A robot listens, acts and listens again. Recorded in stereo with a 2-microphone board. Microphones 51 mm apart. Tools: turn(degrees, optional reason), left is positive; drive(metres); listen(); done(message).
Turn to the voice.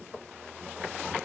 listen()
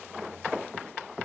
listen()
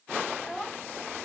turn(degrees=30)
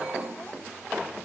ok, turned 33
listen()
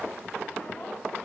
listen()
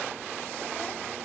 done("I heard a child speaking, but can't make it out now. It was about 25° right or 135° left.")